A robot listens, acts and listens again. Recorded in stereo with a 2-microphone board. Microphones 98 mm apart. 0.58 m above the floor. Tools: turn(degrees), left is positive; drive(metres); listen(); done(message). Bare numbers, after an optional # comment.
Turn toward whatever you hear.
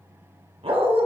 # The dog barking: about 70° right or 110° right.
turn(-70)
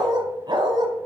# So it is at 50° right.
turn(-50)
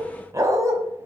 # The dog barking is now 35° right.
turn(-35)
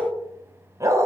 # The dog barking is now 35° right.
turn(-35)
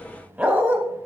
# The dog barking is now 15° right.
turn(-15)
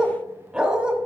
# The dog barking is now 10° right.
turn(-10)
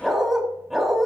done("Facing the dog barking.")